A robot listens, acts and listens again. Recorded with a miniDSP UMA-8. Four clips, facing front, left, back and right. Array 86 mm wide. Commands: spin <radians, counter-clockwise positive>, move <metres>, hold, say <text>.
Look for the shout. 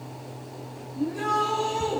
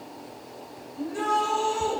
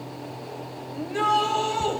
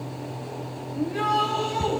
spin -2.88
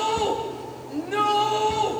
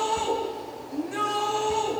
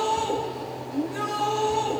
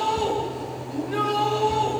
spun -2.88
spin -0.26
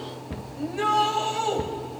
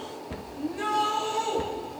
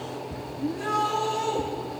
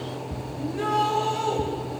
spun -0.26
say Found it: a shout, straight ahead, over 4 m away.